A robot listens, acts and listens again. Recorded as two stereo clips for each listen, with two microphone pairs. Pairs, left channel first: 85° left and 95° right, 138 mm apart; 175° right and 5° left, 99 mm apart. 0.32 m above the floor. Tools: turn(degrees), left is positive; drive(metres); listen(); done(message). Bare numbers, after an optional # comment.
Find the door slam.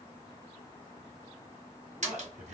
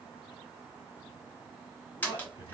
# The door slam: 105° right.
turn(-105)
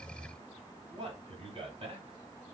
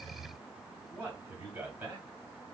done("I heard a door slam from this way, but can't make it out now.")